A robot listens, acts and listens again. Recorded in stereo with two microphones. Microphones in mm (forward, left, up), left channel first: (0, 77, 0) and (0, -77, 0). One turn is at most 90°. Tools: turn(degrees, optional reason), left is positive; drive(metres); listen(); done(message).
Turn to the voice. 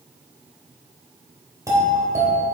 listen()
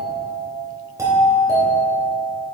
listen()
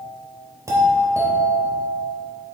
done("I can't make out anyone speaking to turn to.")